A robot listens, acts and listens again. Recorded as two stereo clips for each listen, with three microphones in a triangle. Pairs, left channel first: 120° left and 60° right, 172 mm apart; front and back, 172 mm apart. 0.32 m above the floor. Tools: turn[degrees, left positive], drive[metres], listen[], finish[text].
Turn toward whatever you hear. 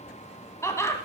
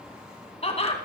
Thought: The laughter: 50° left.
Action: turn[50]
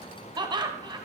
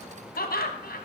Action: finish[Facing the laughter, 2 to 4 m away.]